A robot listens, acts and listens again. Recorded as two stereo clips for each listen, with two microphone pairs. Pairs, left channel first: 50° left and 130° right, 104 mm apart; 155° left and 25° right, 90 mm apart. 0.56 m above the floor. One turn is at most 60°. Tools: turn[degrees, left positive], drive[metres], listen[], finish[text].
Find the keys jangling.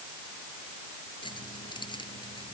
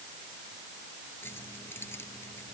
Thought: The keys jangling: 90° left.
Action: turn[60]
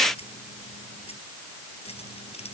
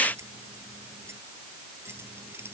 Thought: The keys jangling is now 35° left.
Action: turn[35]
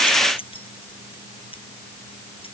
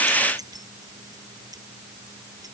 Thought: The keys jangling is now 20° left.
Action: turn[20]
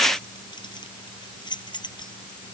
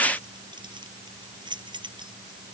Action: finish[Facing the keys jangling.]